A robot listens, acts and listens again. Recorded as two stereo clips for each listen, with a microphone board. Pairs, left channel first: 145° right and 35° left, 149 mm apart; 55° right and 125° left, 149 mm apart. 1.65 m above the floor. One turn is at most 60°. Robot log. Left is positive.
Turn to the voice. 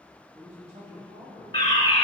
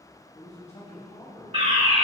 note: The man speaking: 10° right.
cmd yaw -10
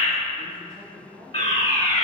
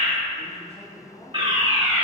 end: Found it: a man speaking, straight ahead.